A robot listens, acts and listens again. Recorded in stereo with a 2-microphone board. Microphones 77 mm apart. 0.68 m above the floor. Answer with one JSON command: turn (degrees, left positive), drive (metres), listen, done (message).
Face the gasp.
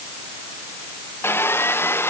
{"listen": true}
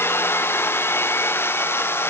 {"listen": true}
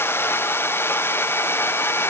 {"done": "I can't make out a gasp to turn to."}